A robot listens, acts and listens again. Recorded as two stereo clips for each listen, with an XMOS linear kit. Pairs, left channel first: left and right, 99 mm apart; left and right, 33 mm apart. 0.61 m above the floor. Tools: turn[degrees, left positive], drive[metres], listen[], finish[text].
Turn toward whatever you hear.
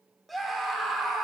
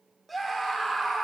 Action: turn[30]
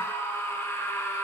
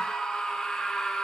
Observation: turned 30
Thought: So it is at 150° left.
Action: turn[150]
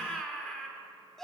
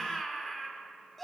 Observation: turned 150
Action: finish[Facing the scream.]